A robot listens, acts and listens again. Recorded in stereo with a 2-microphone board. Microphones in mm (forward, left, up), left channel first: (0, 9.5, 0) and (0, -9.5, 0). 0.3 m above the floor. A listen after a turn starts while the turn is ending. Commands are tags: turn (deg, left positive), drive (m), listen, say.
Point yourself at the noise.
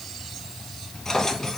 <turn deg="30"/>
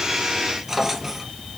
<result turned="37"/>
<say>Found it: a drawer, straight ahead.</say>